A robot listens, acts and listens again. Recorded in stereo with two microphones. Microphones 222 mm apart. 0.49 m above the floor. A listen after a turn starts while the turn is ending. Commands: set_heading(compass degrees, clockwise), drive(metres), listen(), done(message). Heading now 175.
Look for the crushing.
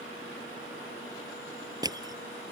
set_heading(190)
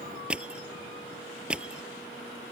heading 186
done("Facing the crushing.")